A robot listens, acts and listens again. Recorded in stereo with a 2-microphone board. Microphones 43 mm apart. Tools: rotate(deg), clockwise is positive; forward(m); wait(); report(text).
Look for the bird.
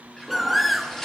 rotate(-30)
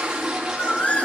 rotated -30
rotate(-150)
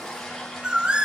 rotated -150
rotate(25)
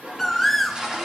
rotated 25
report("Found it: a bird, straight ahead.")